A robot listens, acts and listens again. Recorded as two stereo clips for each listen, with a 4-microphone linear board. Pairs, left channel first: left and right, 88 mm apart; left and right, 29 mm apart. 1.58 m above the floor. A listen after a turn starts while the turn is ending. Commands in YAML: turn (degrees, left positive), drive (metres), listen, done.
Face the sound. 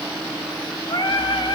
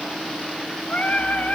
turn: 55
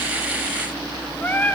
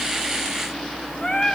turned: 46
turn: 25
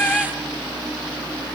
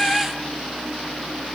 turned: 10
turn: 15
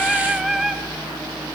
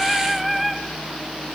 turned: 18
done: "Facing the singing."